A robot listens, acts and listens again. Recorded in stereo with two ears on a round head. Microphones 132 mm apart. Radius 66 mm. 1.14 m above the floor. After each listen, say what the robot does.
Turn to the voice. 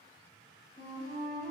Keep listening.
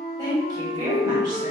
Turn 30° right.
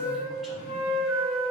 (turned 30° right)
Keep listening.
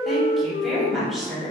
Found it: a woman speaking, straight ahead, 1 to 2 m away.